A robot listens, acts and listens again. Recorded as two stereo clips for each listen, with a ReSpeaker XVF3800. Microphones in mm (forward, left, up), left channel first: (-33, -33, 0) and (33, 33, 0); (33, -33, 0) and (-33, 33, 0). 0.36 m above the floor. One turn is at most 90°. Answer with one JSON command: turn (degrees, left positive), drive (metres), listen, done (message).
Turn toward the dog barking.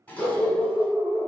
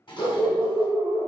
{"turn": -35}
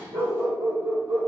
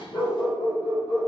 {"done": "Facing the dog barking, 2 to 4 m away."}